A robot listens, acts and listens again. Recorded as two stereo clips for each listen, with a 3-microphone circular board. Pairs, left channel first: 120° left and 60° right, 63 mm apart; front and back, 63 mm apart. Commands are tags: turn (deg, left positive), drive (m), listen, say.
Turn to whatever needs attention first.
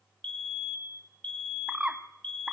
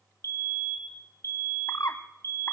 <turn deg="45"/>
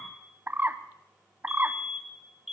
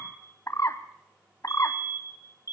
<turn deg="25"/>
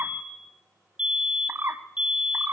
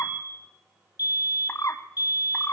<turn deg="10"/>
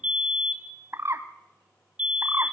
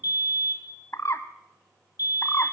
<say>Found it: a fire alarm, straight ahead, 2 to 4 m away.</say>